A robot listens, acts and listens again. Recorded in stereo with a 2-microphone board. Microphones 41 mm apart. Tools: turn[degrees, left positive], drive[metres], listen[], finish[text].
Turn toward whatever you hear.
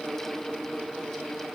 Action: listen[]
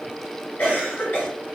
Thought: The cough: about 40° left or 140° left.
Action: turn[40]
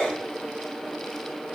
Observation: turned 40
Action: finish[Facing the cough, 1 to 2 m away.]